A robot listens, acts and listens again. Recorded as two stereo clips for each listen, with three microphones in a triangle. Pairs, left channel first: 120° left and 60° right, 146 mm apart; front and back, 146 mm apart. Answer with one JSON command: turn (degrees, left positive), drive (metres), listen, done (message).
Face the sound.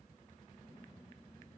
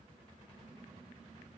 {"listen": true}
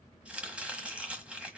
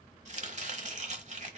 {"turn": -140}
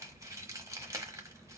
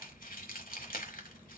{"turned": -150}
{"turn": 10}
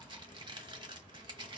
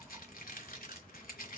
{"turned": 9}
{"done": "Found it: chopping, straight ahead, 1 to 2 m away."}